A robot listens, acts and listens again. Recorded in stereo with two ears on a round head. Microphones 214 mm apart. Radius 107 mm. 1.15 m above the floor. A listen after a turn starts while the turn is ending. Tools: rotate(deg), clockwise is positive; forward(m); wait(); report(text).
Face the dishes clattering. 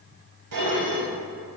rotate(75)
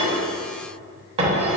rotate(25)
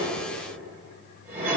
rotate(10)
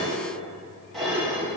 report("Facing the dishes clattering.")